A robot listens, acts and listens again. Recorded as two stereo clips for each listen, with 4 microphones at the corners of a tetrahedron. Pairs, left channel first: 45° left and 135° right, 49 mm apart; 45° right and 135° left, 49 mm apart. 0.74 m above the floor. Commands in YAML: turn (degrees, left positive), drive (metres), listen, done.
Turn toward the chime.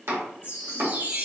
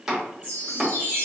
turn: -95
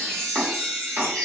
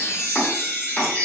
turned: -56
turn: -35
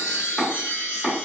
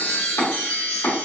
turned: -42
turn: 10
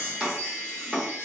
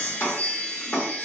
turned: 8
done: "Facing the chime."